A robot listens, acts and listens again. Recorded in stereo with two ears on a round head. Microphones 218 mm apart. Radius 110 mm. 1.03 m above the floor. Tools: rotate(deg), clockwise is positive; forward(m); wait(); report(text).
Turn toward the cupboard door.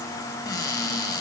rotate(-15)
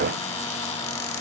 wait()
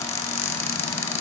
rotate(-150)
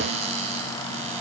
rotate(30)
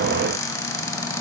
rotate(-15)
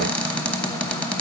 report("Facing the cupboard door.")